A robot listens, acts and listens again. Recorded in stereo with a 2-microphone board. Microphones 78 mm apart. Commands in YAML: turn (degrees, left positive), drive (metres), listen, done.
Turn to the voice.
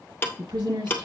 turn: -70
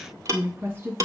turn: -35
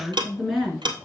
done: "Facing the woman speaking, over 4 m away."